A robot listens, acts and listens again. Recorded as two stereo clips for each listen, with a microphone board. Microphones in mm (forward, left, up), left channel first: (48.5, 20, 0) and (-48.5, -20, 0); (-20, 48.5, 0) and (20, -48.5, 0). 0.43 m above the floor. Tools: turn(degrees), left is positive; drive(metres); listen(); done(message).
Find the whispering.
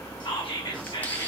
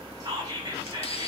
turn(degrees=-15)
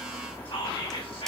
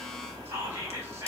done("Facing the whispering.")